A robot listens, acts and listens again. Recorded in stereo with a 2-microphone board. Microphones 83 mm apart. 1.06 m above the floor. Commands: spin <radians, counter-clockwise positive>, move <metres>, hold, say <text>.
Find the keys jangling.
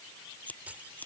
spin -0.26
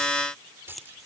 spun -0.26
spin -0.44
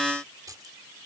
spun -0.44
spin -2.44
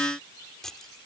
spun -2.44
hold
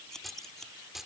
say Facing the keys jangling.